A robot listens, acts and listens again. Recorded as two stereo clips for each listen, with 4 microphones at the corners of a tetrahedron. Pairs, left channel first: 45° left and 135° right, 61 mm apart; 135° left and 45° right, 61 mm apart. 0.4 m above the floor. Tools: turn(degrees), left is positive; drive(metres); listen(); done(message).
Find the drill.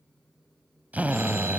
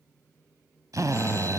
turn(degrees=-70)
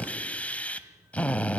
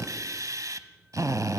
turn(degrees=-20)
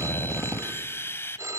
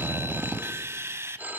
done("Found it: a drill, straight ahead.")